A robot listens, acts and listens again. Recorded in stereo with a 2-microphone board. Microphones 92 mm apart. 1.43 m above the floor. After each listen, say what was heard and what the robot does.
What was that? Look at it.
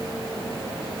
Keep listening.
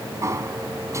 The sliding door: about 35° right or 145° right. Turn 35° right.
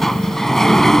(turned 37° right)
Facing the sliding door.